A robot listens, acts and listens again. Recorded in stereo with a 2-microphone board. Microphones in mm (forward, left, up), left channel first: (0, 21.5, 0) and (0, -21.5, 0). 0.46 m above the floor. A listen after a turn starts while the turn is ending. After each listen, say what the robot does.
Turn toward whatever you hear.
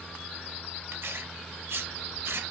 Turn 70° right.
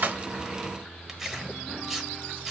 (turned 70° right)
Turn 10° right.
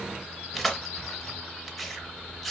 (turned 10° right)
Found it: tearing paper, straight ahead.